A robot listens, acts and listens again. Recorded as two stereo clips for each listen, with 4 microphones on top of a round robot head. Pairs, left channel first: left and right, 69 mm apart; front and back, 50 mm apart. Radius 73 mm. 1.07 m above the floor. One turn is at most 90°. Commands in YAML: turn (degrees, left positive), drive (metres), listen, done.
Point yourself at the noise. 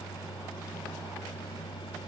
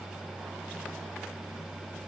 listen: true
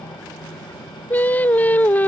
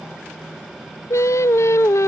turn: 25
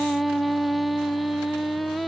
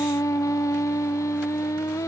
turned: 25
done: "Found it: singing, straight ahead."